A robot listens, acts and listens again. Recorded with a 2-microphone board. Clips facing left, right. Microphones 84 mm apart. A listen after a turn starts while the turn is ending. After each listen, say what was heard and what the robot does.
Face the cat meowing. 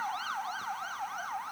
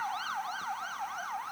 Keep listening.
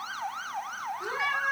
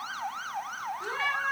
Turn 30° left.
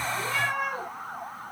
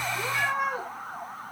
So it is at 25° right. Turn 25° right.
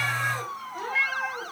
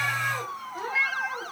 The cat meowing is now 10° right. Turn 10° right.
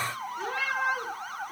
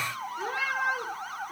Facing the cat meowing.